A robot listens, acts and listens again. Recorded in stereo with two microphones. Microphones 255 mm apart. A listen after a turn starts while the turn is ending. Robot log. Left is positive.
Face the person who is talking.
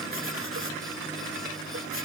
cmd idle
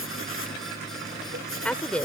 cmd yaw +30
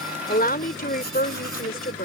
note: So it is at 145° left.
cmd yaw +145
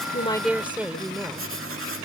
end: Found it: a woman speaking, straight ahead.